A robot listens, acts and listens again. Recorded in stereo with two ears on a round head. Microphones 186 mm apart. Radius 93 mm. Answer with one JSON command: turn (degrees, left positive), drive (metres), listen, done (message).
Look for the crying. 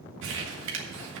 {"listen": true}
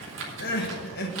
{"turn": 50}
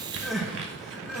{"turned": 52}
{"done": "Found it: crying, straight ahead, 1 to 2 m away."}